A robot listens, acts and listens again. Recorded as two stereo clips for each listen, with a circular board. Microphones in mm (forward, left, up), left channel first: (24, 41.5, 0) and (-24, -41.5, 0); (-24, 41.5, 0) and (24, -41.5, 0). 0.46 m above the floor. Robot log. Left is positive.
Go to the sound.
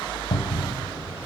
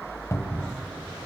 note: The cupboard door: 70° left.
cmd yaw +70
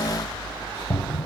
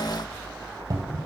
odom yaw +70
note: The cupboard door is now 15° right.
cmd yaw -15
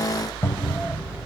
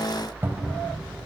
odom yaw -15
cmd fwd 1.0
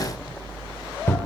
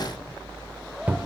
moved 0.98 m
cmd fwd 1.0
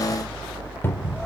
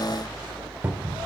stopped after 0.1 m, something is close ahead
end: Arrived at the cupboard door, straight ahead.